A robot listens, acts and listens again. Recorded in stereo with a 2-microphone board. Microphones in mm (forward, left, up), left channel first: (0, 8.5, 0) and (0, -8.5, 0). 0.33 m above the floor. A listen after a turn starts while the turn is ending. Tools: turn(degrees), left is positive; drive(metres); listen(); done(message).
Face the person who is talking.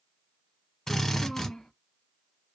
turn(degrees=60)
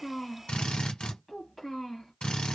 done("Found it: a child speaking, straight ahead.")